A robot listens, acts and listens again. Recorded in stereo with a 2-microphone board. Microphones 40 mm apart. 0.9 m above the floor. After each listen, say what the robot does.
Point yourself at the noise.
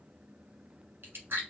Turn 65° right.
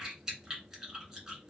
Turn 15° right.
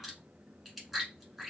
Facing the chewing, 1 to 2 m away.